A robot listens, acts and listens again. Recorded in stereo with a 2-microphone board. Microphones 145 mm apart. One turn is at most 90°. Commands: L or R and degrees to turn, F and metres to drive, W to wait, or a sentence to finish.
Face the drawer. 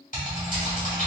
W
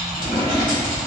L30
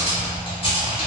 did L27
W
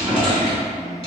Facing the drawer, 1 to 2 m away.